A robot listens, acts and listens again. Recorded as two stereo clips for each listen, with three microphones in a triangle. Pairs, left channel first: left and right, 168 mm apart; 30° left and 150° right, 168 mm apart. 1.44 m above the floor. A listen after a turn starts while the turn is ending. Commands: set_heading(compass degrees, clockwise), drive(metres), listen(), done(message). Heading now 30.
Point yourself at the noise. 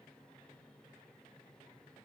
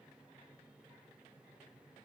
listen()
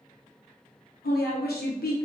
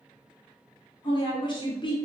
set_heading(305)
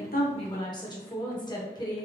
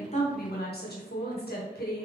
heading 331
set_heading(301)
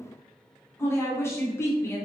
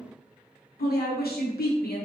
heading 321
set_heading(306)
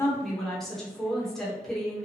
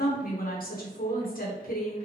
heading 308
done("Facing the woman speaking.")